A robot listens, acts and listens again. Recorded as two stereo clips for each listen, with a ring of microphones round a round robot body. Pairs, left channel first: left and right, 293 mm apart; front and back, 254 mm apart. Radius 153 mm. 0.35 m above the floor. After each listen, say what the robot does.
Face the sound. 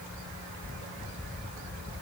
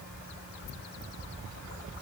Keep listening.
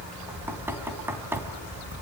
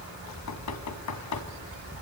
Turn 10° right.
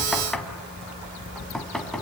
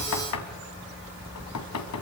Facing the knocking.